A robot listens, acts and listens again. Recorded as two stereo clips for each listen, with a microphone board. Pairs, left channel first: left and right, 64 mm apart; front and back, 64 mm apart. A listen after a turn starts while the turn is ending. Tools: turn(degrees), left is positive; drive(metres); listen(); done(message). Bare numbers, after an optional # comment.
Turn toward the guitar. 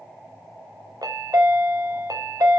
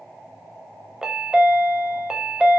listen()
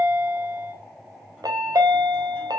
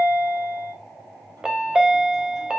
listen()
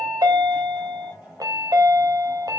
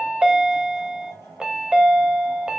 done("I can't make out a guitar, only a chime.")